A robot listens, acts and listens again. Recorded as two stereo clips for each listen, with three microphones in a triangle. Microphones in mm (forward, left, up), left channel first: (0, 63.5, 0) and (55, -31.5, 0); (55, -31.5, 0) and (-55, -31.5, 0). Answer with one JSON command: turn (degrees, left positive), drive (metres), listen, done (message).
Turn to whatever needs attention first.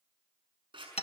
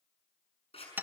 {"listen": true}
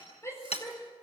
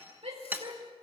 {"turn": -175}
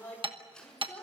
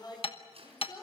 {"turn": 50}
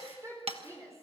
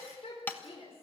{"done": "Found it: a shout, straight ahead."}